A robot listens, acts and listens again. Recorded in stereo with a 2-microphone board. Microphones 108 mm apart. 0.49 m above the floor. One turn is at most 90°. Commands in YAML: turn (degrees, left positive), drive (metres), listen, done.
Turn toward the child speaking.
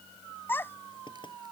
turn: 20
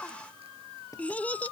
turn: 30
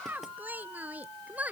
turn: -15
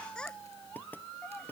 turn: 10
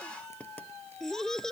done: "Found it: a child speaking, straight ahead."